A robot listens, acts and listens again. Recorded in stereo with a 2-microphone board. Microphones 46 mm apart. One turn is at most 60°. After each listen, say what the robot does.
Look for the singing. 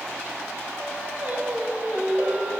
Turn 50° right.
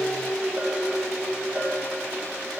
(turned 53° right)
Turn 15° right.
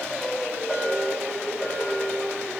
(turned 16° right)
Turn 15° right.
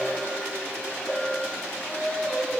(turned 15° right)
Facing the singing, 2 to 4 m away.